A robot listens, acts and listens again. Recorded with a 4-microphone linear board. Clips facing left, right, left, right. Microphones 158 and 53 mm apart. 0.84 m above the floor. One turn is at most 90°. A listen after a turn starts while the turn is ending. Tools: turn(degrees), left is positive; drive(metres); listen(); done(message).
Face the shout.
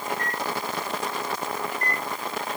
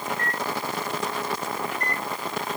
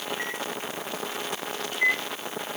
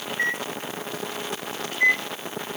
listen()
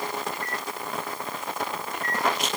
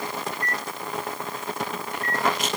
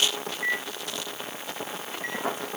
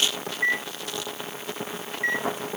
listen()
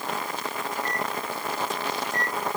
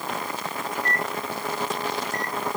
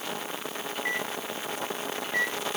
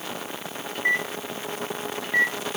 done("I can't make out a shout to turn to.")